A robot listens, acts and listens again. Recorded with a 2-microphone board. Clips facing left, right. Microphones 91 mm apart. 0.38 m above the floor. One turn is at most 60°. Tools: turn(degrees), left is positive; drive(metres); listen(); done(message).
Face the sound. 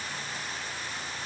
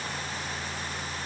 listen()
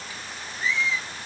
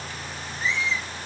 turn(degrees=-60)
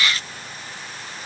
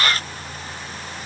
listen()
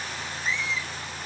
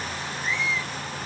turn(degrees=-50)
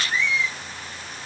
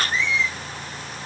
turn(degrees=15)
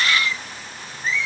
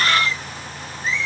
done("Found it: a squeak, straight ahead.")